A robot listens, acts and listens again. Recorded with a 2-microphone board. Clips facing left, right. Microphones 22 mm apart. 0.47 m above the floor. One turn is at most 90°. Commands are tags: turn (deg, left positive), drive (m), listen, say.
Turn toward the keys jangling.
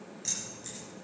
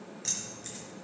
<turn deg="-20"/>
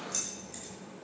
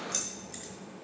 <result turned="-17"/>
<turn deg="-35"/>
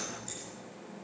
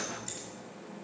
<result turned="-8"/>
<listen/>
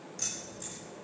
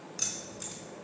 <turn deg="-90"/>
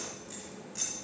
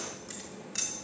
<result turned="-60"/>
<turn deg="-55"/>
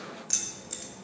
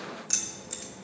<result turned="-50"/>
<say>Found it: keys jangling, straight ahead, 1 to 2 m away.</say>